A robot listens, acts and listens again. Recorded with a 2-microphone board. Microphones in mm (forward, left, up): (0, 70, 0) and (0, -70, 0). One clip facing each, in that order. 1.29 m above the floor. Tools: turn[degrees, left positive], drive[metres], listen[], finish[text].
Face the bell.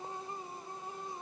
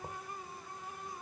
Action: listen[]
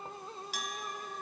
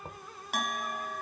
Thought: The bell: about 65° right or 115° right.
Action: turn[-65]
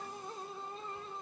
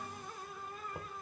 Action: listen[]
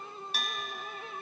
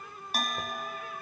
Thought: So it is at 50° right.
Action: turn[-50]
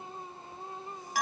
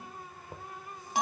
Thought: The bell is now 25° right.
Action: turn[-25]
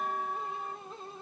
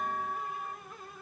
Action: finish[Facing the bell.]